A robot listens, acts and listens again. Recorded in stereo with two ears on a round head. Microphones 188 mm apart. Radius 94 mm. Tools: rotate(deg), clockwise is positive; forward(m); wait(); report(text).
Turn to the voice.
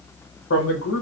rotate(-65)
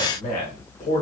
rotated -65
rotate(-40)
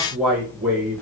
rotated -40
report("Facing the man speaking, 1 to 2 m away.")